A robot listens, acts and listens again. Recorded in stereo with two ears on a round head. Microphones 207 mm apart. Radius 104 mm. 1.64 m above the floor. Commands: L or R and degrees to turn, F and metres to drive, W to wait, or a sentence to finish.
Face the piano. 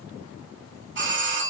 W
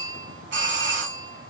W
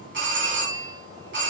I can't make out a piano to turn to.